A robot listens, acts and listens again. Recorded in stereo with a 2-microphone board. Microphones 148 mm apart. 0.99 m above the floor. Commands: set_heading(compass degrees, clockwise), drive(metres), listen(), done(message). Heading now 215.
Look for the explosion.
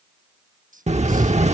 set_heading(265)
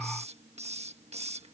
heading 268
listen()
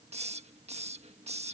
done("I heard an explosion, but can't make it out now. It was about 5° left or 80° right.")